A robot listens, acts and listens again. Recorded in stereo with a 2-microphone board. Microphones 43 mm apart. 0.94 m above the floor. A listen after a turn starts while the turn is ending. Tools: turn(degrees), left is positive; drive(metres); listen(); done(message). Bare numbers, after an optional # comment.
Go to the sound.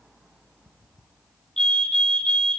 # The fire alarm: about 15° left or 165° left.
turn(15)
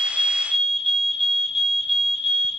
drive(1.0)
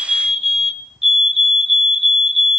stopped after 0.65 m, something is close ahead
# The fire alarm is now 10° right.
turn(-10)
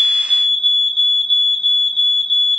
done("Arrived at the fire alarm, straight ahead.")